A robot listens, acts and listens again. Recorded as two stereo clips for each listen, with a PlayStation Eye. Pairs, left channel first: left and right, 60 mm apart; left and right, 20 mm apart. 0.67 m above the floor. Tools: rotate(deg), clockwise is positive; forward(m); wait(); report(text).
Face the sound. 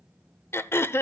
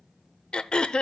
rotate(-45)
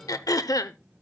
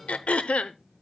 rotate(-90)
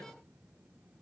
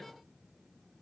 wait()
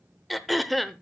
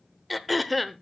report("Found it: throat clearing, straight ahead, under 1 m away.")